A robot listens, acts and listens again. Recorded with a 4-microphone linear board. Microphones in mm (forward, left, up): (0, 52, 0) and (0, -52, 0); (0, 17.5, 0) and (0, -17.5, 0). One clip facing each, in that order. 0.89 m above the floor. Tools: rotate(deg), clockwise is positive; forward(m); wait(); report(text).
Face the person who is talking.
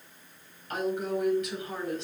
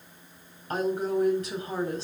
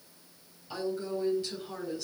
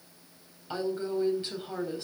rotate(35)
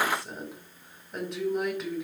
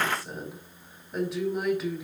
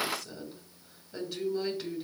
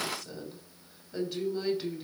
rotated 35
report("Found it: a woman speaking, straight ahead.")